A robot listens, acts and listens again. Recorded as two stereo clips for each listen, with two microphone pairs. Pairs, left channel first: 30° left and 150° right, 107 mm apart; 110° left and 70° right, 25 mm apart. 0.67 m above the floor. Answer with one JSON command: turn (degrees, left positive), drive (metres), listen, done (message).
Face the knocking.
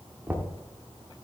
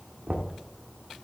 {"turn": -75}
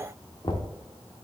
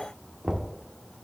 {"done": "Found it: knocking, straight ahead, 1 to 2 m away."}